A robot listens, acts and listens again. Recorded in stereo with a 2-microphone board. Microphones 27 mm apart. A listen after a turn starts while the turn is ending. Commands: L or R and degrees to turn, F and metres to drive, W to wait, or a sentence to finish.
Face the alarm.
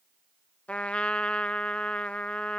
W
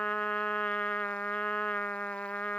W
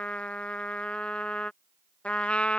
I can't make out an alarm, only a trumpet.